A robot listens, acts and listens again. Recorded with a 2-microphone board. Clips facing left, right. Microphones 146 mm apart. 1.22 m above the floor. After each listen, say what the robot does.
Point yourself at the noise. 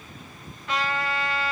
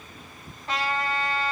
Turn 35° right.
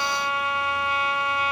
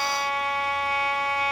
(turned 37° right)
Turn 110° right.
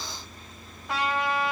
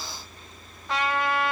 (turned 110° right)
Found it: a trumpet, straight ahead, 2 to 4 m away.